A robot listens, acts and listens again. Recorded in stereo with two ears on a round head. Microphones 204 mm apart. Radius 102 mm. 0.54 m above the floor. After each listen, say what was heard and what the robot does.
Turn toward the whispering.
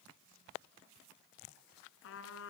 Keep listening.
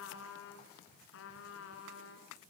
Keep listening.
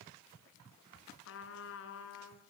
I can't make out whispering, only a trumpet.